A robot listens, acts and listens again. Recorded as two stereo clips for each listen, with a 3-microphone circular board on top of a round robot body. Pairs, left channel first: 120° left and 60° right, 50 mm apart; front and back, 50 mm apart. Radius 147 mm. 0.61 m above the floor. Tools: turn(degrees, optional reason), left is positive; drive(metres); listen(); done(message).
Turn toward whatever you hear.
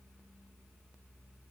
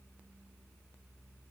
listen()
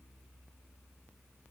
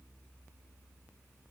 listen()
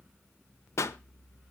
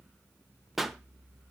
turn(degrees=95, reason="The pop: 95° left.")
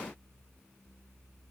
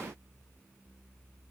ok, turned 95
done("Facing where the pop came from. I can't hear it now.")